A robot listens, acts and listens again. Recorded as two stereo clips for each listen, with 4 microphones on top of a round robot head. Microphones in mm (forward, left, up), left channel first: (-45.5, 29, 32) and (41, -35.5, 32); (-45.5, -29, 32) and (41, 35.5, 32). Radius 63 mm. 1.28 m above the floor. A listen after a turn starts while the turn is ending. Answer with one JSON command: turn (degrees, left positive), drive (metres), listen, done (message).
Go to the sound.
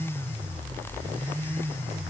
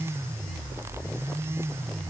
{"listen": true}
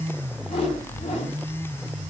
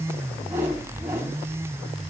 {"turn": 105}
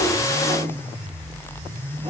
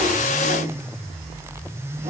{"listen": true}
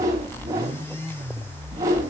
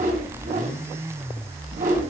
{"turn": 25}
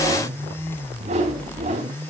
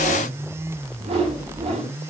{"drive": 1.0}
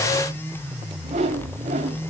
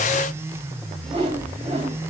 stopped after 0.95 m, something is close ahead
{"done": "Something is in my way. I am facing the whoosh but have not reached it."}